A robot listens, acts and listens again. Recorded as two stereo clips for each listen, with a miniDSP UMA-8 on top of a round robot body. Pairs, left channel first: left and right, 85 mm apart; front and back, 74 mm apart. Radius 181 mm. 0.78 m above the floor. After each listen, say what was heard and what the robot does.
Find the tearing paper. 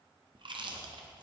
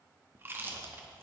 Keep listening.
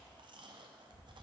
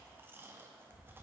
Keep listening.
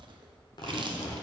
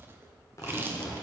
The tearing paper: 55° left. Turn 55° left.
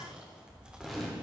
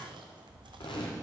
Facing the tearing paper, under 1 m away.